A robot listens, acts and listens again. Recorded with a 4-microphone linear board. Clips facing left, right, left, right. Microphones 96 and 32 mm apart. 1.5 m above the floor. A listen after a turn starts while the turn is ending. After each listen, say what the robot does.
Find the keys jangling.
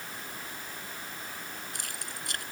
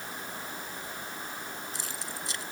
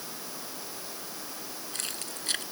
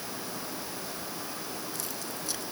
Turn 55° left.
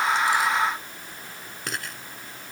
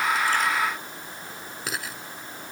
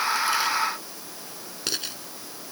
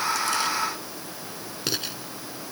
Facing the keys jangling.